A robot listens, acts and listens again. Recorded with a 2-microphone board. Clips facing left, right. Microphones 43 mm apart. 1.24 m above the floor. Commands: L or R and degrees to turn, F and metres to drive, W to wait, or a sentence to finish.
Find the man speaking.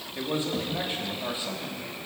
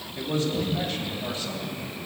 L20
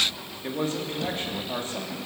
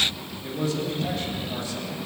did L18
L145
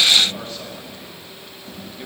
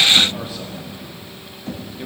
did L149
Facing the man speaking, 2 to 4 m away.